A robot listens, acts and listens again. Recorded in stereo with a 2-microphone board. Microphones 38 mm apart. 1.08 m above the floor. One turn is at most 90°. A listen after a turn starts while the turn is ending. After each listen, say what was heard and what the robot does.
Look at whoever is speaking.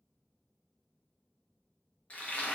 Keep listening.
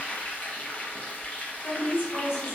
The woman speaking: about 70° left or 110° left. Turn 70° left.
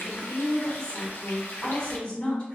So it is at 30° left. Turn 30° left.
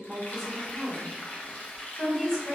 Facing the woman speaking.